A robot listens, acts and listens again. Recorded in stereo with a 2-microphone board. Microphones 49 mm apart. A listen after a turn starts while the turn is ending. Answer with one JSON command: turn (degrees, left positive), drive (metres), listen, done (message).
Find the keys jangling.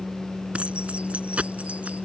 {"turn": -25}
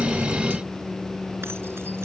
{"listen": true}
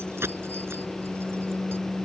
{"turn": -120}
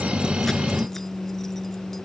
{"listen": true}
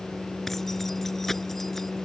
{"listen": true}
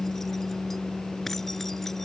{"done": "I heard keys jangling from this way, but can't make it out now."}